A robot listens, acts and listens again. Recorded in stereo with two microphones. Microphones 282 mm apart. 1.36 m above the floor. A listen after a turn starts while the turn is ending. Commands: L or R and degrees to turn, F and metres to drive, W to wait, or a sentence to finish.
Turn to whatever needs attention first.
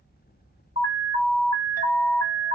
L60
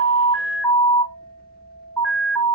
Found it: an alarm, straight ahead.